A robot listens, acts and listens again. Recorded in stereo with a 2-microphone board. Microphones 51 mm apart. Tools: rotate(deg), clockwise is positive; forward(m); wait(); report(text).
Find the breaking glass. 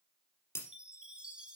rotate(-55)
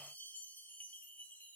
wait()
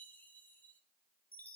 report("I heard breaking glass, but can't make it out now. It was about straight ahead or 70° left.")